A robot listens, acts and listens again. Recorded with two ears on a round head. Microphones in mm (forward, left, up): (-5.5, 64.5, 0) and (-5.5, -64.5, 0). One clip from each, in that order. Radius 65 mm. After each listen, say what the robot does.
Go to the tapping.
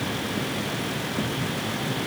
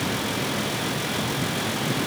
Keep listening.
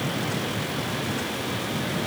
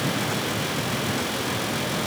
Keep listening.
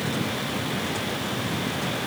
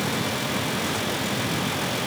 I can't make out tapping.